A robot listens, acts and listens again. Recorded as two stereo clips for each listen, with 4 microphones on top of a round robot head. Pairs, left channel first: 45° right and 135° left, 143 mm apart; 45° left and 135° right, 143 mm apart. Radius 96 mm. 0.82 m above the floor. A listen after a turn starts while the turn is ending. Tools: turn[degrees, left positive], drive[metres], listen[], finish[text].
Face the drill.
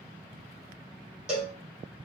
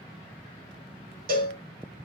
Action: listen[]
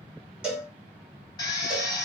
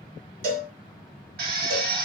Thought: The drill: 110° right.
Action: turn[-110]
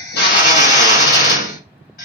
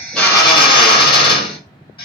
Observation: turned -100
Thought: The drill is now 10° right.
Action: turn[-10]
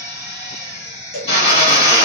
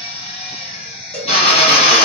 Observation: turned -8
Action: finish[Facing the drill, 2 to 4 m away.]